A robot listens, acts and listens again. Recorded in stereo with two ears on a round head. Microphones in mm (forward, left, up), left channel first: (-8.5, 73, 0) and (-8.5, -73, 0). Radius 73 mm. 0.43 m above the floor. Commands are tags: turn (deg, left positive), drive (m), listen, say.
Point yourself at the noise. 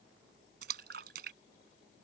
<turn deg="-70"/>
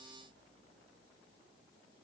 <listen/>
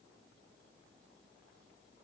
<say>I heard a splash, but can't make it out now. It was about straight ahead or 40° right.</say>